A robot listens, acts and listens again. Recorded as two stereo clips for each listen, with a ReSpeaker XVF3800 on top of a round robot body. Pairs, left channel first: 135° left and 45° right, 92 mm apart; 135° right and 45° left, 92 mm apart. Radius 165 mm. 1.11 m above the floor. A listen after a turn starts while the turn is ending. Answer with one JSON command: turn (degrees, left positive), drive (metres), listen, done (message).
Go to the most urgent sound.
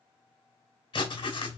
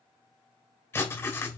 {"listen": true}
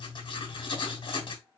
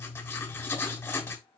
{"listen": true}
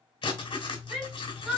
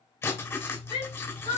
{"turn": -130}
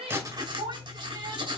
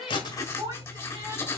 {"drive": 1.0}
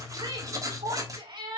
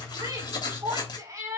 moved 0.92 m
{"turn": -10}
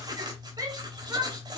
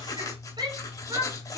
{"drive": 1.0}
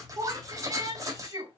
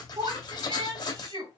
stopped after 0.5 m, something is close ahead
{"done": "Blocked. The shout is further on, straight ahead."}